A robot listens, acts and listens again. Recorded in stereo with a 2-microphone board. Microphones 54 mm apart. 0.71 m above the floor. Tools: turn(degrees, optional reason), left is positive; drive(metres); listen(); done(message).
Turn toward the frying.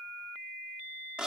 listen()
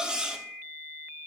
listen()
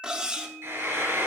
turn(degrees=-55, reason="The frying: about 55° right or 125° right.")
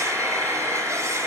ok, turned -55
turn(degrees=-70, reason="So it is at 70° right.")
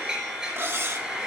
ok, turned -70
turn(degrees=-10, reason="The frying is now 10° right.")
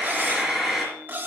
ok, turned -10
done("Facing the frying, over 4 m away.")